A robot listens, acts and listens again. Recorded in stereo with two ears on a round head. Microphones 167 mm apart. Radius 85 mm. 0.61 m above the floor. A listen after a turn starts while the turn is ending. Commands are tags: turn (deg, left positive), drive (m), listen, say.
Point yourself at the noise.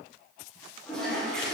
<turn deg="30"/>
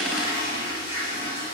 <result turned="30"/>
<turn deg="145"/>
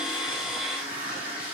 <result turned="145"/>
<turn deg="-10"/>
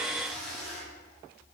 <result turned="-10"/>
<say>Found it: a toilet flushing, straight ahead.</say>